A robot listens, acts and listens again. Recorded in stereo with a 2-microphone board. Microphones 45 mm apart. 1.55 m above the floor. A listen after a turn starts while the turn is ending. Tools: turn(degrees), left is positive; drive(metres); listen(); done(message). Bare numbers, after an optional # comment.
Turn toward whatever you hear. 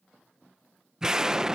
turn(-30)
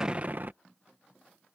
# So it is at 135° right.
turn(-135)
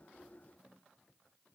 done("I heard an explosion from this way, but can't make it out now.")